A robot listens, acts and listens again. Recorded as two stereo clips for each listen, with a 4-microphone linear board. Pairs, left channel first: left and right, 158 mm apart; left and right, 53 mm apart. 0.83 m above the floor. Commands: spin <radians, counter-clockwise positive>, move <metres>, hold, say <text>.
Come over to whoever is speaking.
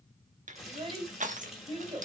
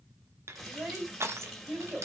spin -0.61
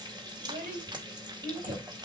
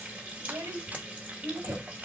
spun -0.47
spin -2.09
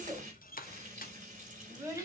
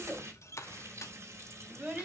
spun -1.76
spin -0.35
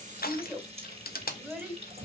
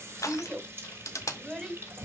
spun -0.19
spin -0.17
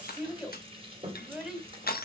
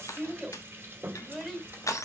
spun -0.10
move 1.0
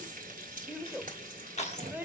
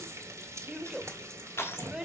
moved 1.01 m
spin -0.17
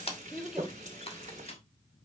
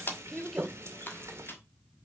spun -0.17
move 1.0
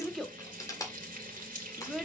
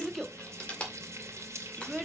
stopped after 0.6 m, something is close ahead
say Arrived at the child speaking, straight ahead.